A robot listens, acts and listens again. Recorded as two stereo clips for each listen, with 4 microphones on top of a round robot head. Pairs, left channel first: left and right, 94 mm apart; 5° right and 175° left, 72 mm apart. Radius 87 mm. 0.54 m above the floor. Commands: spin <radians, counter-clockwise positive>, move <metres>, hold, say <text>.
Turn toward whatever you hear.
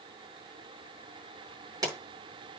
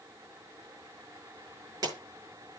spin -2.44
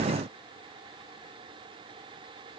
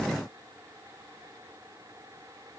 say I heard a pop from this way, but can't make it out now.